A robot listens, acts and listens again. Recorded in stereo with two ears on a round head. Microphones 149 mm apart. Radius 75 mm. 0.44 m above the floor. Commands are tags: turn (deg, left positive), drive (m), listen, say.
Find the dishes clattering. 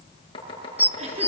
<turn deg="-30"/>
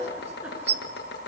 <turn deg="-135"/>
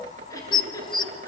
<turn deg="30"/>
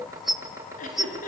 <say>Found it: dishes clattering, straight ahead, 1 to 2 m away.</say>